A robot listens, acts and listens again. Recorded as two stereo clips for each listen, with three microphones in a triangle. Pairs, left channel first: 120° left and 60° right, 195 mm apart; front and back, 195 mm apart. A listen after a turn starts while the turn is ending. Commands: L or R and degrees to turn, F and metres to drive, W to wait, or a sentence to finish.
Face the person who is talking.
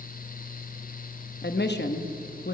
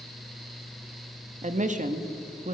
L135
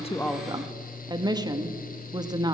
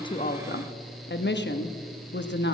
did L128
L10
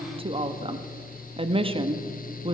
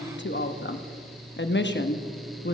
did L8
Facing the woman speaking.